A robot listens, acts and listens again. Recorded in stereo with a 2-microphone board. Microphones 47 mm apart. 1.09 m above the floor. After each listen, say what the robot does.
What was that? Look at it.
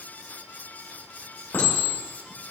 Turn 75° left.
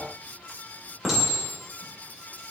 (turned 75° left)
Facing the clink.